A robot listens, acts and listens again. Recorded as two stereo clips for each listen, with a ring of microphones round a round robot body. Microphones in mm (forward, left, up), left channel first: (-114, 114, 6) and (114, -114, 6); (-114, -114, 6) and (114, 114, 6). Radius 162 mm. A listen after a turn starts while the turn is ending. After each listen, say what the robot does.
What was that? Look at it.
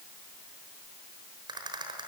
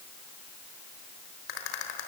Turn 120° right.
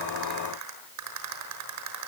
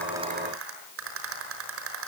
Facing the rattle, over 4 m away.